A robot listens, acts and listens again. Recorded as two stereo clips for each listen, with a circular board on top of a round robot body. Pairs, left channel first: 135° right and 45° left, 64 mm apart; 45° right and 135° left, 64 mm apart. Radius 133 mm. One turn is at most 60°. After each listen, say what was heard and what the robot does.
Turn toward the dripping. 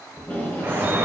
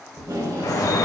The dripping: 15° right. Turn 15° right.
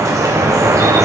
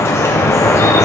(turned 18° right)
Found it: dripping, straight ahead.